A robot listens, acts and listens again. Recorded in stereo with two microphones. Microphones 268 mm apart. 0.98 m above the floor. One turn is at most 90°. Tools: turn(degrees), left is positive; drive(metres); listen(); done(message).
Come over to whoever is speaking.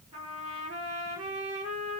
listen()
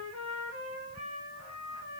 listen()
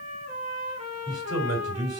turn(degrees=-65)
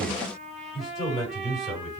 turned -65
drive(metres=1.0)
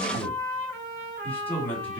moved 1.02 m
drive(metres=1.0)
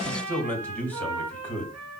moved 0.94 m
drive(metres=1.0)
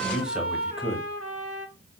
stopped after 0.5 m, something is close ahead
done("Arrived at the man speaking, straight ahead.")